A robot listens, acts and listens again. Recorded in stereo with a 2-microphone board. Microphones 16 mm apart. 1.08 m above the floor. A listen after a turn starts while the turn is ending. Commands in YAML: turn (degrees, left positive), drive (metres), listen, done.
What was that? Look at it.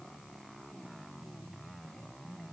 listen: true
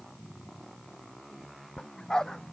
turn: 50
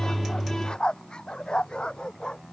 turn: 75
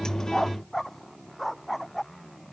done: "Facing the dog barking."